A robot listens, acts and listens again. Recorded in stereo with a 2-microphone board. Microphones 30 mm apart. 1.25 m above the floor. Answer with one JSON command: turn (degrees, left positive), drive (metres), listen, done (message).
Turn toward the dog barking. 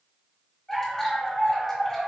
{"turn": 30}
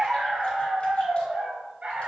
{"turn": -55}
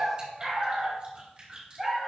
{"turn": -10}
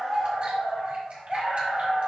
{"done": "Facing the dog barking, 2 to 4 m away."}